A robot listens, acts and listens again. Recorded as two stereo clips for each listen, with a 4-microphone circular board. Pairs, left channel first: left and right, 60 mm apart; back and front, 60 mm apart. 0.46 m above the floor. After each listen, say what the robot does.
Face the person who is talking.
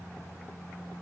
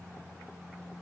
Keep listening.
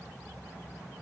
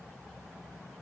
Keep listening.
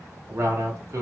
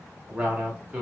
Turn 65° right.
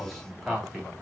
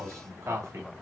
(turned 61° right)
Found it: a man speaking, straight ahead, 1 to 2 m away.